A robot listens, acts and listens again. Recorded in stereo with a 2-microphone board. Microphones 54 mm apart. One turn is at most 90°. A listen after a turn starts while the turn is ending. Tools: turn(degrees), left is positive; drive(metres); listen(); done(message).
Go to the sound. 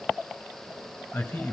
turn(degrees=55)
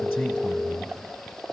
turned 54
drive(metres=1.0)
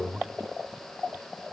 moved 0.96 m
drive(metres=1.0)
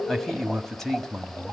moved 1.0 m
drive(metres=1.0)
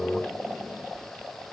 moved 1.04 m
listen()
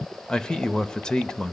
turn(degrees=15)
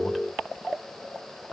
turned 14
listen()
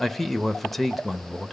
drive(metres=1.0)
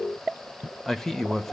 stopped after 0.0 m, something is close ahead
done("I am next to the man speaking.")